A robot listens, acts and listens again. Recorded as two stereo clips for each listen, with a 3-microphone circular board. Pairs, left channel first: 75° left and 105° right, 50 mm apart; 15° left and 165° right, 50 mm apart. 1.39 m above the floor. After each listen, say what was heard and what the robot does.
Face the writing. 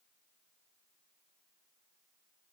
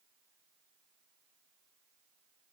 Keep listening.
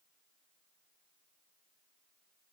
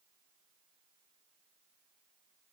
Keep listening.
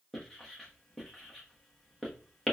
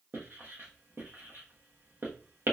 The writing: 160° left. Turn 160° left.
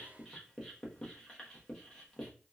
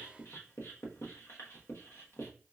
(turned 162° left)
Found it: writing, straight ahead, 1 to 2 m away.